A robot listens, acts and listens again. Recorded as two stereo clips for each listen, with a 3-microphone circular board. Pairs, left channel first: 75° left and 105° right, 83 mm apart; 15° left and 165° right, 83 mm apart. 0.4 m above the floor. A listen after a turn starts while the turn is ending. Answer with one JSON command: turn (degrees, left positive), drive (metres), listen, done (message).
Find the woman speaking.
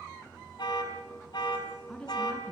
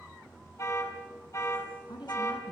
{"done": "Facing the woman speaking."}